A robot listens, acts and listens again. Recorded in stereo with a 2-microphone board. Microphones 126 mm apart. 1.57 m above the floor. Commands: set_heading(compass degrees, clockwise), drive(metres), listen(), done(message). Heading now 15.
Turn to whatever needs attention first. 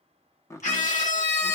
set_heading(285)
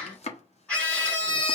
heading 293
set_heading(283)
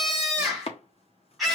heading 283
done("Found it: a scream, straight ahead, 2 to 4 m away.")